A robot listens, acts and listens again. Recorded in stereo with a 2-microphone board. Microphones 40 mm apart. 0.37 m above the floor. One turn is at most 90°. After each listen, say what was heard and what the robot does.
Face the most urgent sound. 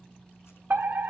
The fire alarm: about 55° right or 125° right. Turn 55° right.
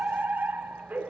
So it is at 60° right. Turn 60° right.
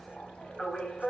The fire alarm is now 20° left. Turn 20° left.
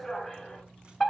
Found it: a fire alarm, straight ahead, 2 to 4 m away.